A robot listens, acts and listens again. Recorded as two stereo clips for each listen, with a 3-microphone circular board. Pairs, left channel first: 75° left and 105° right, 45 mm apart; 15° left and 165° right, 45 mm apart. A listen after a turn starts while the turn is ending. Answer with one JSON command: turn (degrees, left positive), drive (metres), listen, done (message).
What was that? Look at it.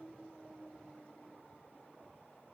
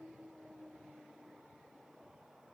{"listen": true}
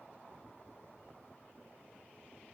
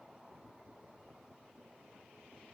{"listen": true}
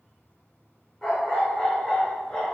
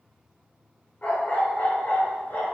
{"turn": -10}
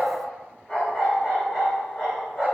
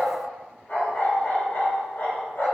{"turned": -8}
{"done": "Found it: a dog barking, straight ahead, 2 to 4 m away."}